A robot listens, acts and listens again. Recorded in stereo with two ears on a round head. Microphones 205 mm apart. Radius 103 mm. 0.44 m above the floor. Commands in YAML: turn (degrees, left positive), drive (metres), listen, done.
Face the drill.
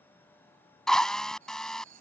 turn: 30
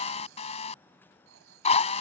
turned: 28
turn: 150
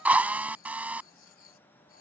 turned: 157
done: "Found it: a drill, straight ahead."